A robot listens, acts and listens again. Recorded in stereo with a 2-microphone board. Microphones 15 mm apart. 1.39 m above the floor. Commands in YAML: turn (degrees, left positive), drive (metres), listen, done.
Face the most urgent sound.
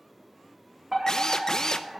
turn: -25
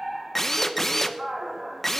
turn: -130
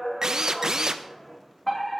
turn: 25
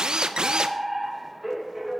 turn: -10
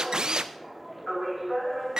done: "Facing the fire alarm."